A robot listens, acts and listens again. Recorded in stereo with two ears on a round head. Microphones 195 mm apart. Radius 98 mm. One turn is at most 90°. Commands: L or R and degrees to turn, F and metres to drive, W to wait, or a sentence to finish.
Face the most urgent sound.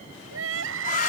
R70
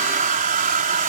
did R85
W
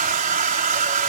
W
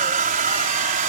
I heard crying, but can't make it out now. It was about 15° left or 25° right.